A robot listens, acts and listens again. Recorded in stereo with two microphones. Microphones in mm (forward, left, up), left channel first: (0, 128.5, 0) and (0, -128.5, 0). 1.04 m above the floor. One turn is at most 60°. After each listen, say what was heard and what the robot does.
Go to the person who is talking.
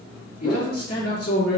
The man speaking: about 65° left or 115° left. Turn 60° left.
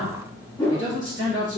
So it is at 50° left. Turn 50° left.
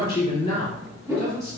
The man speaking is now 25° left. Turn 25° left.
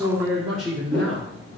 Drive 1.0 m forward.
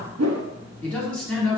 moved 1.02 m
Drive 1.0 m forward.
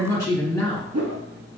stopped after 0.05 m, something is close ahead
The man speaking is now 15° left. Turn 15° left.
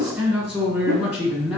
I am next to the man speaking.